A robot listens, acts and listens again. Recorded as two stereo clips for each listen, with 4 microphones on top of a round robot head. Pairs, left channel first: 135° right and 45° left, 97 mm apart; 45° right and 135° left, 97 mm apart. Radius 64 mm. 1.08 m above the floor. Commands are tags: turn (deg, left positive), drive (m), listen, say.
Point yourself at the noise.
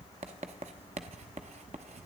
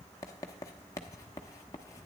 <turn deg="15"/>
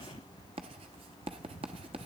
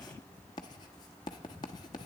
<say>Found it: writing, straight ahead, under 1 m away.</say>